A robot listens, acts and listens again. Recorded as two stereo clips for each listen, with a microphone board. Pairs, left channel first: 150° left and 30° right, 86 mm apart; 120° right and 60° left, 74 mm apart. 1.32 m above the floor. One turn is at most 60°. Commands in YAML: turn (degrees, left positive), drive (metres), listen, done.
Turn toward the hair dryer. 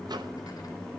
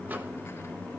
listen: true
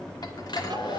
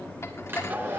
turn: 60
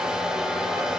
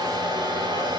turn: 55
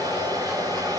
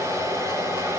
turn: 10
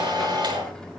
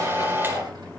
done: "Facing the hair dryer."